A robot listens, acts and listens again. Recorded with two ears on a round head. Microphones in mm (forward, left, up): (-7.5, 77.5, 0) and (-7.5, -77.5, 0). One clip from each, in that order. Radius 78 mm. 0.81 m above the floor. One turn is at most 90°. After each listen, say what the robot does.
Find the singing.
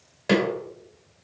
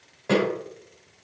Keep listening.
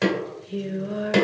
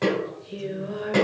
Turn 30° left.
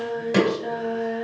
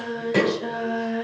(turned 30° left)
Turn 30° right.
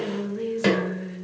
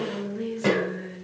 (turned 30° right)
Turn 10° left.
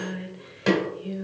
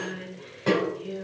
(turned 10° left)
Found it: singing, straight ahead.